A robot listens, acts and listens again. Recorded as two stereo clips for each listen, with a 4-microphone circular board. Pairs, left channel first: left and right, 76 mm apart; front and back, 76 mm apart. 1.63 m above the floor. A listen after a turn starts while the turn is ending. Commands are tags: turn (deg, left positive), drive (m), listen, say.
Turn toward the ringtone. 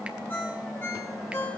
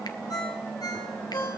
<turn deg="30"/>
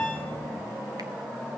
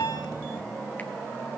<listen/>
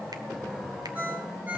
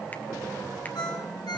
<turn deg="-20"/>
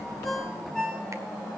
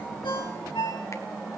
<say>Facing the ringtone.</say>